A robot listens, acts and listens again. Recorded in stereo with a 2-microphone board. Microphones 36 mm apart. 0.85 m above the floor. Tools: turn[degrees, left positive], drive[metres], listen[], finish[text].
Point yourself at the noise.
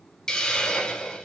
Thought: The hiss: about 20° left or 160° left.
Action: turn[20]
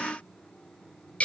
Thought: So it is at 140° left.
Action: turn[140]
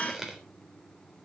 Thought: The hiss is now 10° right.
Action: turn[-10]
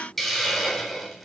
Action: finish[Facing the hiss.]